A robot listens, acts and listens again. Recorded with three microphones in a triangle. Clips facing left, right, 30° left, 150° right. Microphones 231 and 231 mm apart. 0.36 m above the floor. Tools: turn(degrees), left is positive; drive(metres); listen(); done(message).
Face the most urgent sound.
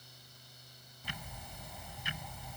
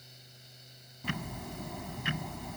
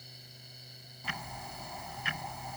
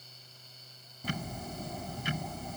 listen()
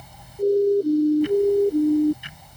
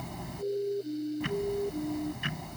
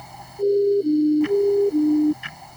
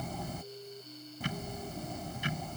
turn(degrees=45)
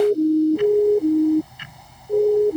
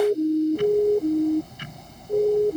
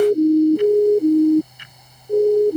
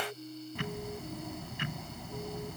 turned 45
turn(degrees=10)
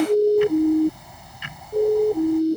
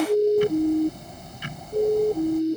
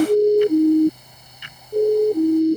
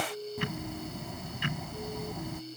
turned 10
turn(degrees=10)
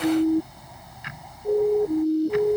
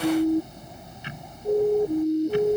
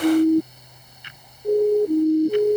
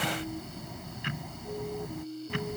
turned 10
done("Found it: a siren, straight ahead.")